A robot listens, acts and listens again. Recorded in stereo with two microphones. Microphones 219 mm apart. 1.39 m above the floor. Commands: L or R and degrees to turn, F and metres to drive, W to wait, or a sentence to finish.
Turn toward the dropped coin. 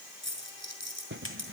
R55
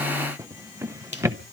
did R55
W
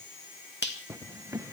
I heard a dropped coin, but can't make it out now. It was about straight ahead or 70° right.